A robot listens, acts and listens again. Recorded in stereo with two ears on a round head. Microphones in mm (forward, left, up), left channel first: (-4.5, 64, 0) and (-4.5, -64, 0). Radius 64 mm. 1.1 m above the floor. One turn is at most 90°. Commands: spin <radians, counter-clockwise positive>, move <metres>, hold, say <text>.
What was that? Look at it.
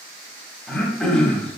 spin 0.52
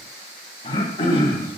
spin 1.57
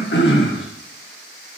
spin 1.57
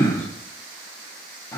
spin 0.44
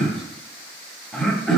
say Facing the throat clearing.